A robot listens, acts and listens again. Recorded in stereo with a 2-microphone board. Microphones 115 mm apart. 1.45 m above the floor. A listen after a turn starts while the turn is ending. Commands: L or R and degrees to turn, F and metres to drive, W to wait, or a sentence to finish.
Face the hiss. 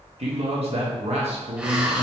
R30
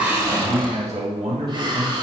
R140
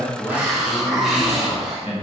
Found it: a hiss, straight ahead, under 1 m away.